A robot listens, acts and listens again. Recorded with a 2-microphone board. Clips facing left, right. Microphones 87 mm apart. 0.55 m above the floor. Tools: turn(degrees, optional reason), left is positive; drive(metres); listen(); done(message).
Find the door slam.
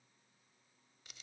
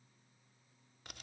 listen()
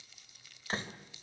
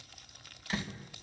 turn(degrees=35, reason="The door slam: about 35° left or 145° left.")
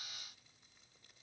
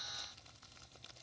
listen()
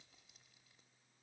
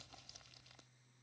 done("I heard a door slam, but can't make it out now. It was about straight ahead or 110° left.")